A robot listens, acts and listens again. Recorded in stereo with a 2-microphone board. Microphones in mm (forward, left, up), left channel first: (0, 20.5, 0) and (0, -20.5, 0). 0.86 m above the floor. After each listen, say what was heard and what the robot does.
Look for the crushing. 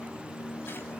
Keep listening.
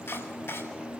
Keep listening.
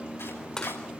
The crushing: about 15° left or 165° left. Turn 15° left.
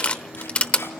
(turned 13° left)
So it is at 150° left. Turn 150° left.
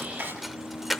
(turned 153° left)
Facing the crushing, under 1 m away.